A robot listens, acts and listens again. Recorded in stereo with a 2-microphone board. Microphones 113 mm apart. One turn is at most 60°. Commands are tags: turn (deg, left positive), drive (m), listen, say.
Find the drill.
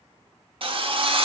<turn deg="-50"/>
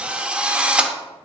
<turn deg="-10"/>
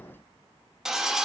<say>Found it: a drill, straight ahead.</say>